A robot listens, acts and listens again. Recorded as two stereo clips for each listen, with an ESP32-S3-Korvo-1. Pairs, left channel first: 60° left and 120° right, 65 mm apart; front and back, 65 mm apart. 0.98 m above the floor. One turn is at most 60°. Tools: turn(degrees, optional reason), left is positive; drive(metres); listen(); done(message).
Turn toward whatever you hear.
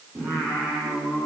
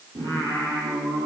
turn(degrees=60, reason="The singing: 170° left.")
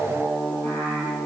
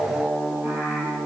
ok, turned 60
turn(degrees=60, reason="The singing is now 115° left.")
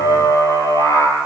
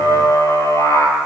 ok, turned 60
turn(degrees=35, reason="The singing is now 35° left.")
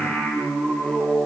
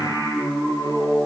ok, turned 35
turn(degrees=-10, reason="The singing is now 10° right.")
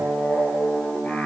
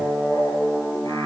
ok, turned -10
done("Facing the singing.")